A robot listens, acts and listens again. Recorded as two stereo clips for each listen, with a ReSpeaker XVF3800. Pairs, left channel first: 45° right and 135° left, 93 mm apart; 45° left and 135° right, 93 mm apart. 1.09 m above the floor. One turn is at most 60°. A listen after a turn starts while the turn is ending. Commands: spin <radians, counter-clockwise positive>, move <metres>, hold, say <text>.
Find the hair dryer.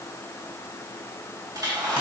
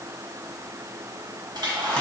spin -1.05
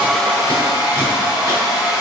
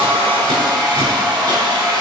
spin -1.05
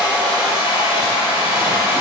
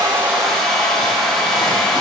spin -0.79
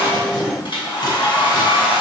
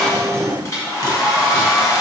spin -0.17
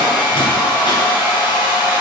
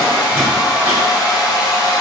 say Facing the hair dryer, 1 to 2 m away.